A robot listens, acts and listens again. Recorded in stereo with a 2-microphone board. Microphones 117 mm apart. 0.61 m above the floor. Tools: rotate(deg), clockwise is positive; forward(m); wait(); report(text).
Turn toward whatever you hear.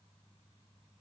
wait()
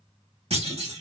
rotate(60)
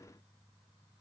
wait()
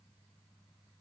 report("I heard a clunk, but can't make it out now. It was about straight ahead or 60° right.")